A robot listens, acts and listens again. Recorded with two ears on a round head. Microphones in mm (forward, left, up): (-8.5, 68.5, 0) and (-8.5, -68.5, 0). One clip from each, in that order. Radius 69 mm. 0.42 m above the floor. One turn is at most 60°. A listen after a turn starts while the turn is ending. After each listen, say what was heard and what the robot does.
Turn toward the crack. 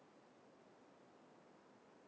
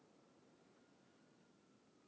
Keep listening.
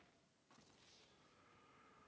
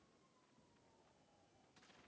Keep listening.
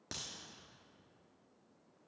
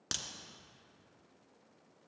The crack: about 65° right or 115° right. Turn 60° right.
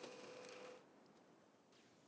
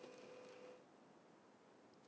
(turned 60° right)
Keep listening.
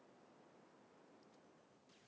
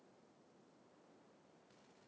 I heard a crack, but can't make it out now. It was about 5° right or 55° right.